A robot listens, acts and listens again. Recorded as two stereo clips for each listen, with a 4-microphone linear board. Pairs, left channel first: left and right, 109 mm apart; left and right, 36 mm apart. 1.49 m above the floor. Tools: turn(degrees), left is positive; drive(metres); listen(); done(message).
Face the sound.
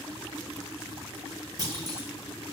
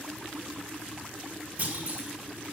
turn(degrees=-35)
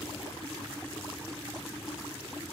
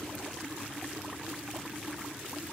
listen()
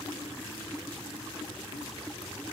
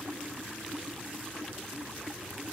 done("I heard a clunk, but can't make it out now. It was about straight ahead or 110° right.")